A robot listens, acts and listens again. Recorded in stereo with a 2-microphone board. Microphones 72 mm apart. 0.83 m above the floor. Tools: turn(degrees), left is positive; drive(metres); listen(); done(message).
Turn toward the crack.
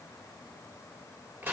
listen()
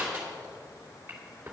listen()
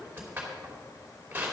done("I can't make out a crack to turn to.")